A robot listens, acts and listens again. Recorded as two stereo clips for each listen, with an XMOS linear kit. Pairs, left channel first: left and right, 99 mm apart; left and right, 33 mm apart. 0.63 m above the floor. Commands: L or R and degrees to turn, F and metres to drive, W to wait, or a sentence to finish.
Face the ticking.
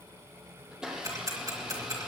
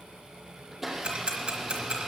R35
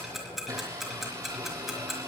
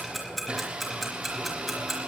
Found it: ticking, straight ahead.